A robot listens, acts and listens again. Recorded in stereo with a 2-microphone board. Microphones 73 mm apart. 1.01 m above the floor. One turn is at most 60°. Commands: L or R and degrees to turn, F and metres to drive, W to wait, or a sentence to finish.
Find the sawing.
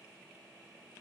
W
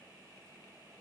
W
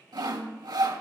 R60
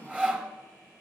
R20
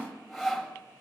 Found it: sawing, straight ahead, 1 to 2 m away.